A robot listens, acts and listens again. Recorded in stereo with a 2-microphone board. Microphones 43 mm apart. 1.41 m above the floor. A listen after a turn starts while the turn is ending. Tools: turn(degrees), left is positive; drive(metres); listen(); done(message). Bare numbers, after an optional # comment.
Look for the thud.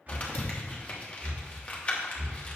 # The thud: about 65° left or 115° left.
turn(65)
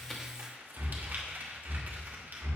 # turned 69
listen()
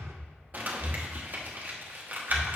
done("I heard a thud, but can't make it out now. It was about 5° right or 45° left.")